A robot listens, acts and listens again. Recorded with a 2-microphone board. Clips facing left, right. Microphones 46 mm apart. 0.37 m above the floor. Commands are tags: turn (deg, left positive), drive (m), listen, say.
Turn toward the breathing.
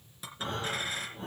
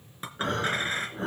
<turn deg="-90"/>
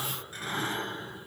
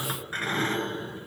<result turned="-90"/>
<say>Found it: breathing, straight ahead.</say>